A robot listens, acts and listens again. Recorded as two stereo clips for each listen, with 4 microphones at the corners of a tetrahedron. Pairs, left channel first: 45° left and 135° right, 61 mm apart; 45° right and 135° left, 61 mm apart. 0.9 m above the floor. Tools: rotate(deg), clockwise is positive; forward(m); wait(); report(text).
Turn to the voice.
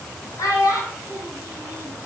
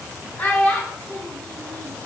rotate(-25)
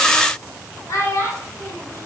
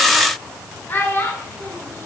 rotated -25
rotate(-10)
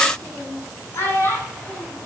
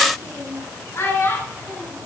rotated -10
report("Found it: a child speaking, straight ahead, over 4 m away.")